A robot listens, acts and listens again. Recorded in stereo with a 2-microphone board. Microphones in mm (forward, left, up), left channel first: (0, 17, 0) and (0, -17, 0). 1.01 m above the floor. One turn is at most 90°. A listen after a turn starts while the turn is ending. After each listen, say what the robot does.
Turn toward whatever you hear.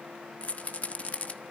Turn 45° left.
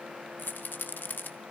Turn 90° left.
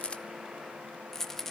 Turn 15° left.
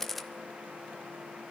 Keep listening.
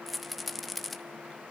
Found it: a rattle, straight ahead.